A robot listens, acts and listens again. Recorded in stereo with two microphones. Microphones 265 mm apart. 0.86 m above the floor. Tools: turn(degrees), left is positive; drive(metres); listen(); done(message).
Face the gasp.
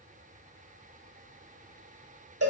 listen()
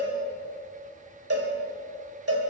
listen()
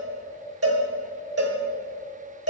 done("I can't make out a gasp to turn to.")